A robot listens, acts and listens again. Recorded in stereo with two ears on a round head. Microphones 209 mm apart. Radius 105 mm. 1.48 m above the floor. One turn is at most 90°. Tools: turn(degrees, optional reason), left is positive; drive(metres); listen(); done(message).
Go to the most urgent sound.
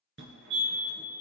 turn(degrees=-55, reason="The fire alarm: about 55° right or 125° right.")
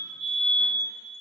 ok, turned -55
turn(degrees=-65, reason="So it is at 65° right.")
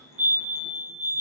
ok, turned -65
turn(degrees=-35, reason="The fire alarm is now 35° right.")
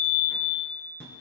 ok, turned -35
drive(metres=1.0)
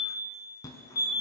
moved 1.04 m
turn(degrees=20, reason="The fire alarm is now 20° left.")
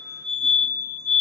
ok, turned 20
drive(metres=1.0)
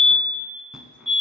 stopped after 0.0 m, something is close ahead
done("I am next to the fire alarm.")